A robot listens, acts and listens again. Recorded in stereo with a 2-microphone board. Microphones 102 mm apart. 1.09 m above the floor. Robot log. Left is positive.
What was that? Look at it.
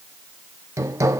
note: The hammering: about 30° right or 150° right.
cmd yaw -30
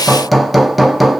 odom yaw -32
end: Facing the hammering.